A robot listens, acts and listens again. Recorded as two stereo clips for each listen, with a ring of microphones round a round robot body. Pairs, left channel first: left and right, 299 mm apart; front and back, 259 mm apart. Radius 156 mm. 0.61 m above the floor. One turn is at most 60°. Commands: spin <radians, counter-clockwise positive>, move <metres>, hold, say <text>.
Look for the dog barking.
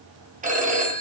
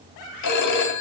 hold
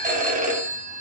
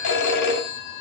hold
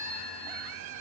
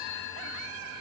say I can't make out a dog barking to turn to.